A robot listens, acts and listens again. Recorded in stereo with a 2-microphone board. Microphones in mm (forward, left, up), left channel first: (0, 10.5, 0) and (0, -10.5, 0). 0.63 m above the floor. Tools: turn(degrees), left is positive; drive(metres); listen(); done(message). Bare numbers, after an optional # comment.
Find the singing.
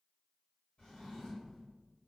listen()
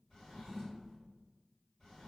listen()
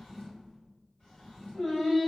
# The singing: about 65° left or 115° left.
turn(65)
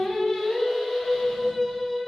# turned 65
# So it is at 35° left.
turn(35)
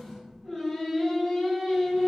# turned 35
# The singing is now 20° right.
turn(-20)
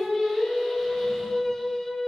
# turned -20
done("Found it: singing, straight ahead, 2 to 4 m away.")